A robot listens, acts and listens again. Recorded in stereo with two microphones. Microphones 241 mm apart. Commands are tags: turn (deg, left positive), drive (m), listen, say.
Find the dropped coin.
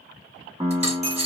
<turn deg="-25"/>
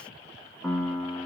<listen/>
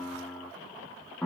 <say>I heard a dropped coin, but can't make it out now. It was about straight ahead or 130° right.</say>